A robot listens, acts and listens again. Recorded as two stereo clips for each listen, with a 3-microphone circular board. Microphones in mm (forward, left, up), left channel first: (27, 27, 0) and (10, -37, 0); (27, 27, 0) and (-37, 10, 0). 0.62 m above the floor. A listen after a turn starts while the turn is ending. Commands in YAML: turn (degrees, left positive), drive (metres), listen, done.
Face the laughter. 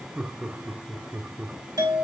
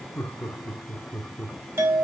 turn: -50
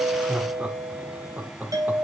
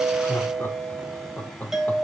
turn: -45
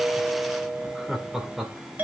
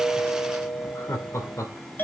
turn: -25
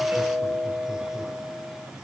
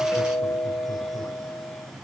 listen: true
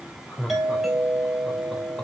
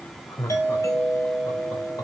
done: "Found it: laughter, straight ahead, 2 to 4 m away."